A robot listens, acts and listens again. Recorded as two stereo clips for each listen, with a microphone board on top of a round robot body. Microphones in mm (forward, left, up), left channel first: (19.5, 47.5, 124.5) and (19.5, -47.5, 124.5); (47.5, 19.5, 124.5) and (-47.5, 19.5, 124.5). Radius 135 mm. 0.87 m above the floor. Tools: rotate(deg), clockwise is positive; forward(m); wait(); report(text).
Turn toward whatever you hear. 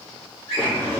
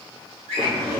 rotate(-180)
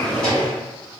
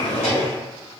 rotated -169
rotate(-10)
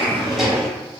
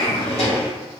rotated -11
report("Found it: a drawer, straight ahead.")